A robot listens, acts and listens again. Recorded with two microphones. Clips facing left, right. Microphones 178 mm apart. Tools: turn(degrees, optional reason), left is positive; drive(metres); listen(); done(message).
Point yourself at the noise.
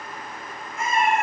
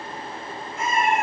turn(degrees=65, reason="The cat meowing: about 65° left or 115° left.")
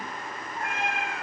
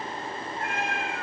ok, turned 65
turn(degrees=30, reason="So it is at 30° left.")
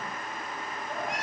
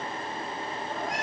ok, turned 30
done("Found it: a cat meowing, straight ahead, 2 to 4 m away.")